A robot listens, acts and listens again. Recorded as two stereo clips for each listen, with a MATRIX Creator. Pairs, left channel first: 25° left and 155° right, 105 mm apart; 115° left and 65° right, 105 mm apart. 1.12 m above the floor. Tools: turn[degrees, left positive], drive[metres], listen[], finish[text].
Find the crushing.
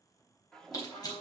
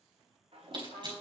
Thought: The crushing: 30° right.
Action: turn[-30]
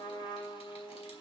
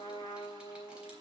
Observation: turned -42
Thought: Nothing new. It was at 10° left.
Action: turn[10]
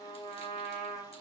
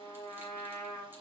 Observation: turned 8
Action: listen[]
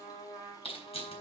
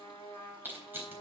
Action: finish[Facing the crushing, 2 to 4 m away.]